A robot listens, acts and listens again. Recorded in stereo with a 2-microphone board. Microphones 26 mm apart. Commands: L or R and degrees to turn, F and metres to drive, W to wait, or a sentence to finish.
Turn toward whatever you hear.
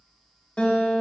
L45
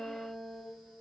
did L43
Found it: a guitar, straight ahead.